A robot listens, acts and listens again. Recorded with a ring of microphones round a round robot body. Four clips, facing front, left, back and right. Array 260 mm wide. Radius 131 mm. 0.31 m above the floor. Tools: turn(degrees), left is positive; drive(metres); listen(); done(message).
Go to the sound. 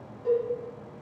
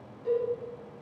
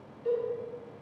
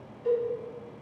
turn(degrees=-20)
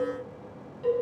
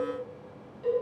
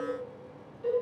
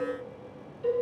drive(metres=1.0)
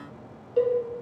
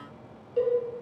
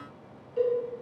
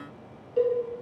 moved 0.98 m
drive(metres=1.0)
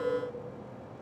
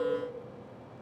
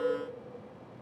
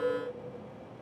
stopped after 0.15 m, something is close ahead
listen()
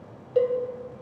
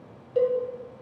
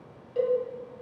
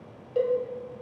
done("I am next to the cowbell.")